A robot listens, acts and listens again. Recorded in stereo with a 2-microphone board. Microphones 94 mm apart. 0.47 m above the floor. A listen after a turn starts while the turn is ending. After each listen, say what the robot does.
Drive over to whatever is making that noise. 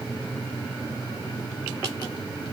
Keep listening.
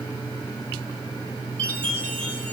Turn 30° left.
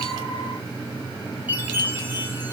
Turn 20° right.
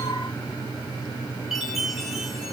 Drive 1.0 m forward.
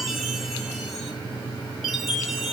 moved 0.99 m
Drive 1.0 m forward.
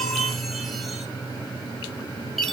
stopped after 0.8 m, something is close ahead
Arrived at the chime, straight ahead.